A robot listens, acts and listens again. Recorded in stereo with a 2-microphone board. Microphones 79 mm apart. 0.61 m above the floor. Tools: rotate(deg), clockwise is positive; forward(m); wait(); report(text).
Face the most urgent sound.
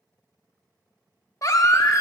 rotate(-45)
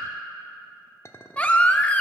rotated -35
rotate(-20)
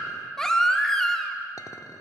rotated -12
report("Found it: a baby crying, straight ahead, under 1 m away.")